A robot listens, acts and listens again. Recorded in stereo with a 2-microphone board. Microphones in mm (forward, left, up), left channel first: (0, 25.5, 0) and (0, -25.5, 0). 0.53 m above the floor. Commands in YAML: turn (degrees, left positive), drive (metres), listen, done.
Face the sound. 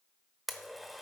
turn: 30
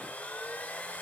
turn: 150
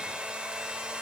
turn: -20
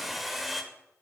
done: "Found it: a blender, straight ahead, under 1 m away."